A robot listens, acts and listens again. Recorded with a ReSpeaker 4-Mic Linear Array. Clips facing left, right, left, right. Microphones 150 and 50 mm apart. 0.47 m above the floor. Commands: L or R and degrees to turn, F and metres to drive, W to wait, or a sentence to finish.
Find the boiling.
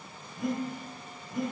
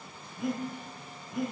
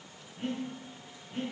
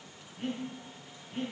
W
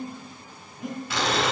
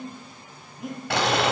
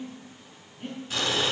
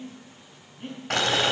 R65
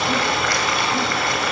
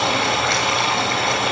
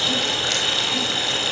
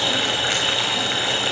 R25
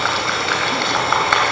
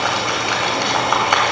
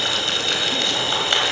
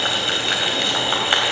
R20
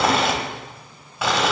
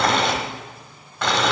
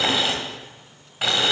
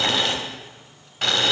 L10
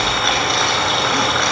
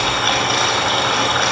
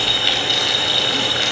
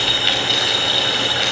Facing the boiling.